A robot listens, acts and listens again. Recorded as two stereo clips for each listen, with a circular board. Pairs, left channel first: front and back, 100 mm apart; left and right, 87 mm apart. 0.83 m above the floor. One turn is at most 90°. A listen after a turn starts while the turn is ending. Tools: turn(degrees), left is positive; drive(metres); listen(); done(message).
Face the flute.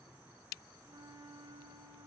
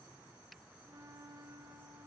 turn(degrees=-90)
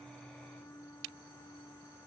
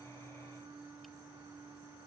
turn(degrees=-60)
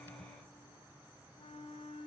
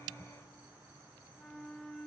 turn(degrees=10)
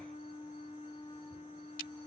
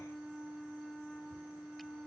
done("Found it: a flute, straight ahead.")